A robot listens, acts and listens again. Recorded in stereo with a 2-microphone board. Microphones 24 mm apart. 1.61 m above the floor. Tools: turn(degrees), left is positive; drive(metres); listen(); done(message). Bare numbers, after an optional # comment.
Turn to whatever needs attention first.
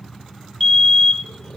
turn(30)
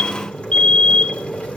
# So it is at 140° left.
turn(140)
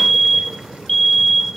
# The fire alarm is now 20° left.
turn(20)
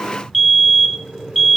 # The fire alarm is now 10° left.
turn(10)
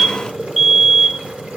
done("Facing the fire alarm, 1 to 2 m away.")